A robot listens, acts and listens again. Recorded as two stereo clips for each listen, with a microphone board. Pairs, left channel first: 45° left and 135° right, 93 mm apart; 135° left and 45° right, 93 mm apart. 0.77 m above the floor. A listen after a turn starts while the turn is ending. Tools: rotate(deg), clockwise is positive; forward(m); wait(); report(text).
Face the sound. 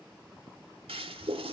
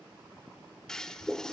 rotate(140)
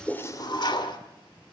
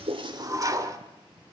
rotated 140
report("Found it: a toilet flushing, straight ahead, 1 to 2 m away.")